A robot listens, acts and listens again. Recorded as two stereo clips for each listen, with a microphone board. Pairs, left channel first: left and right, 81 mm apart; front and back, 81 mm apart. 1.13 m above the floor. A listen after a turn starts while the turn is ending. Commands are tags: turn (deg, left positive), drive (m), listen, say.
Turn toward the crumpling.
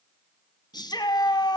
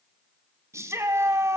<listen/>
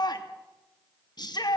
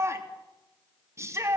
<listen/>
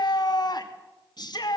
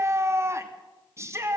<say>I can't make out crumpling, only a shout.</say>